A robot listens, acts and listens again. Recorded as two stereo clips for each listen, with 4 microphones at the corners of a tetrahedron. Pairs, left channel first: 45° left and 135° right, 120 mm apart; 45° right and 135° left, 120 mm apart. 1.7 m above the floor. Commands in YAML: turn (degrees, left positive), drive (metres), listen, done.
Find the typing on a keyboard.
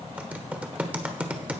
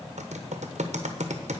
turn: 145
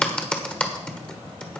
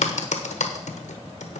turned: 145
turn: -35
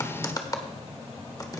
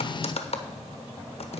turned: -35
turn: -15
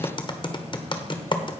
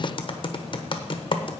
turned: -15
done: "Found it: typing on a keyboard, straight ahead."